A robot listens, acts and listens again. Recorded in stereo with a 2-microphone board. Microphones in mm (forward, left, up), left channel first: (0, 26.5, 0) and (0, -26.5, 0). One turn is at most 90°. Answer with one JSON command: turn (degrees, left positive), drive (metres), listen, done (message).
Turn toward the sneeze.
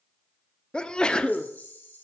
{"turn": 20}
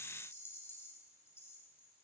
{"listen": true}
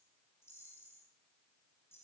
{"done": "I heard a sneeze, but can't make it out now. It was about straight ahead or 140° left."}